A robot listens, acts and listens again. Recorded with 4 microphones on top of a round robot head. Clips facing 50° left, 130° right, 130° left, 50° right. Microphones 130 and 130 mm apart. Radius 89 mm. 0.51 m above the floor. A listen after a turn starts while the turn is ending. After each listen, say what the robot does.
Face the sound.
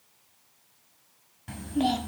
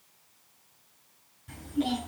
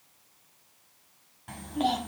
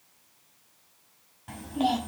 Turn 35° left.
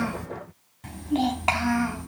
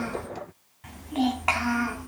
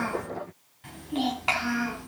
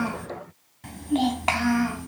Turn 10° right.
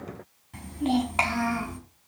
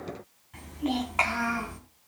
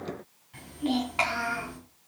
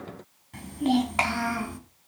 Turn 10° right.
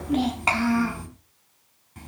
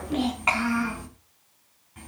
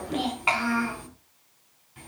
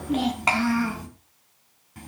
Facing the child speaking.